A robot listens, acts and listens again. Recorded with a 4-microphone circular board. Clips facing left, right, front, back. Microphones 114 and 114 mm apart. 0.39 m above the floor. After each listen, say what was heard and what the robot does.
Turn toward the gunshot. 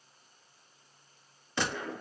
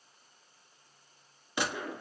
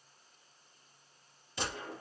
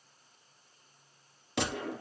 The gunshot: 170° right. Turn 170° right.
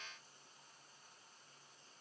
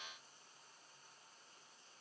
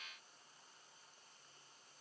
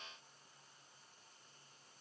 Facing where the gunshot came from. I can't hear it now.